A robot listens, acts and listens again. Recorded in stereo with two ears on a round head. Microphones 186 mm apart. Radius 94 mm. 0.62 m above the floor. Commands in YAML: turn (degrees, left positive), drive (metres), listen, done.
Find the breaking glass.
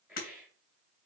turn: 45
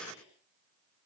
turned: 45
listen: true
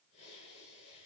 done: "I heard breaking glass, but can't make it out now. It was about straight ahead or 90° left."